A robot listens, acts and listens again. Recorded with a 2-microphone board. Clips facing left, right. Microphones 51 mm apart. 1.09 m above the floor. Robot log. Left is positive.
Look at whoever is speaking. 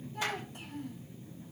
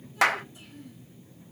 note: The child speaking: about 60° left or 120° left.
cmd yaw +60
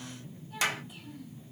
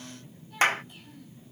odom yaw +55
end: Found it: a child speaking, straight ahead.